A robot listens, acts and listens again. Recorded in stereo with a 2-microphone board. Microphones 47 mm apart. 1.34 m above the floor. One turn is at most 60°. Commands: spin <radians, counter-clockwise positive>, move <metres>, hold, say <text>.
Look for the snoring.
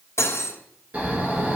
spin -0.61
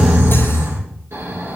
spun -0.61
spin -1.05
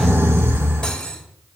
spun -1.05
spin -1.05
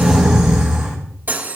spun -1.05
spin -0.26
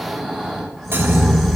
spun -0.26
say Facing the snoring, over 4 m away.